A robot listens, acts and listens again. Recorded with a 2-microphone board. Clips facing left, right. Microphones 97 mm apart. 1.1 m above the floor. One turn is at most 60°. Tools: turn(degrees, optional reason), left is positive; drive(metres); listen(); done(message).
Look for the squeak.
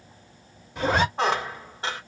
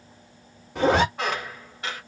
turn(degrees=30, reason="The squeak: about 30° left or 150° left.")
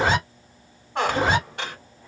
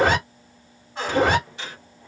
turn(degrees=60, reason="So it is at 120° left.")
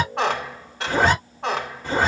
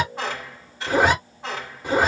turn(degrees=60, reason="The squeak is now 75° left.")
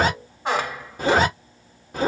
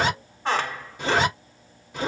turn(degrees=15, reason="The squeak is now 15° left.")
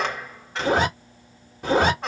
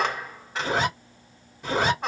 done("Facing the squeak.")